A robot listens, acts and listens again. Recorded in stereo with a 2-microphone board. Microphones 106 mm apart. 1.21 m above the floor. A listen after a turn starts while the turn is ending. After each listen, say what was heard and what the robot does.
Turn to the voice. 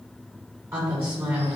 The woman speaking: about 25° right or 155° right. Turn 25° right.
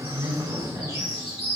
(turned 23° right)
So it is at 130° right. Turn 130° right.
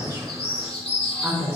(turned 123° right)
Found it: a woman speaking, straight ahead, 2 to 4 m away.